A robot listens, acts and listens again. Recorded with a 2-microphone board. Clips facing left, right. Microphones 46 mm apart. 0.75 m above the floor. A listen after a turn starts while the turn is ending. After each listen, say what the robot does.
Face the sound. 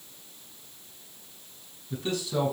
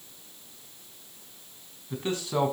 Turn 40° right.
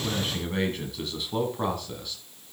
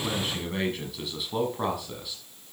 Turn 10° right.
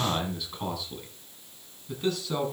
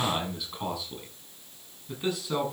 Turn 15° right.
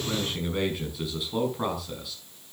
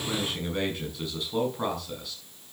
Found it: a man speaking, straight ahead.